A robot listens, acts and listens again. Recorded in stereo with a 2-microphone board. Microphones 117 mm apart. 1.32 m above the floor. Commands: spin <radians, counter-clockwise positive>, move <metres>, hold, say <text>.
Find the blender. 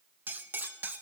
hold
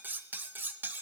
hold
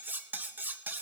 say I can't make out a blender, only cutlery clinking.